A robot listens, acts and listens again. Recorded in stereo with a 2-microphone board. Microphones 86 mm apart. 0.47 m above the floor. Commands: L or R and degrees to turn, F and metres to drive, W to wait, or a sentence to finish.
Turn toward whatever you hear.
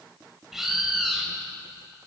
R30
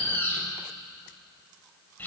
L25
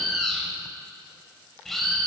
Facing the bird.